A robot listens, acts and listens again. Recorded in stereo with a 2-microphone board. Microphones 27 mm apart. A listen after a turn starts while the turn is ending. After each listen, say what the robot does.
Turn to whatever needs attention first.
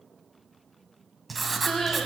Turn 15° left.
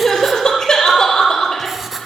Turn 150° left.
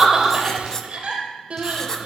Turn 45° right.
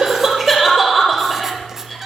Facing the crying, over 4 m away.